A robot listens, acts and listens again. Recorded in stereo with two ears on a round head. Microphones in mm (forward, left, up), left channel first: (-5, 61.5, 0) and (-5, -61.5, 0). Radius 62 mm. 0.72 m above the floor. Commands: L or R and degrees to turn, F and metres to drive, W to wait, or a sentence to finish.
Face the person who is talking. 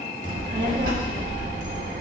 R65
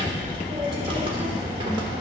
R40
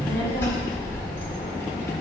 L15
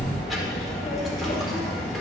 Facing the child speaking.